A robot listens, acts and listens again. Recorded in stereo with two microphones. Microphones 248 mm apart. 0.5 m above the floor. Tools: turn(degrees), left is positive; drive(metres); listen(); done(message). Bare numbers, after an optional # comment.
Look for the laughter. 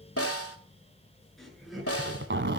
turn(30)
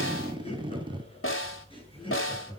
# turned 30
# So it is at 160° left.
turn(160)
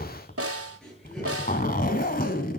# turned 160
done("Found it: laughter, straight ahead, over 4 m away.")